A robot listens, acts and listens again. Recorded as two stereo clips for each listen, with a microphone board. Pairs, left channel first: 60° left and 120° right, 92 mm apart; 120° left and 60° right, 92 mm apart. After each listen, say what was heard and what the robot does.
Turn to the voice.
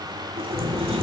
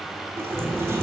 Found it: a child speaking, straight ahead.